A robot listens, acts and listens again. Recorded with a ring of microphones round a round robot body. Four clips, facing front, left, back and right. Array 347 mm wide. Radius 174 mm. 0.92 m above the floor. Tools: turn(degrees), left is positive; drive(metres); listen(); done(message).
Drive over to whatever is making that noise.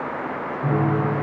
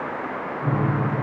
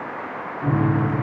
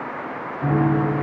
turn(degrees=-100)
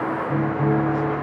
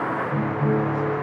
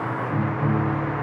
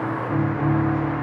turn(degrees=-45)
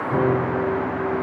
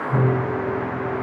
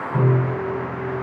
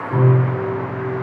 turn(degrees=15)
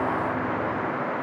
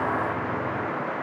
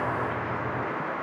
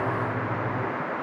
listen()
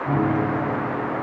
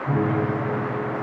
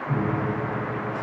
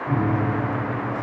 drive(metres=1.0)
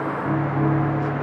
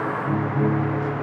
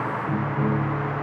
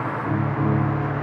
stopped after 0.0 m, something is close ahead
done("Something is in my way. I am facing the piano but have not reached it.")